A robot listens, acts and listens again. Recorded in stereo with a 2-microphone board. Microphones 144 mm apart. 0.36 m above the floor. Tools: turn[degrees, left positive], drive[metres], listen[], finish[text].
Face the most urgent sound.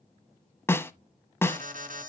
Thought: The alarm: about 70° right or 110° right.
Action: turn[-70]
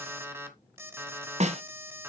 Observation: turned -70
Thought: So it is at 20° right.
Action: turn[-20]
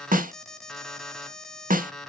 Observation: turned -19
Action: finish[Facing the alarm, 1 to 2 m away.]